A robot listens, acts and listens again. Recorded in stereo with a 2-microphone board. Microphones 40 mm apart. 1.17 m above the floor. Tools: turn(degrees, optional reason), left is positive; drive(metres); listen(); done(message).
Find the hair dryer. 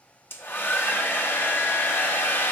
turn(degrees=65, reason="The hair dryer: about 65° left or 115° left.")
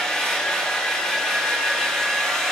turn(degrees=15, reason="So it is at 15° left.")
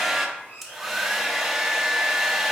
done("Facing the hair dryer.")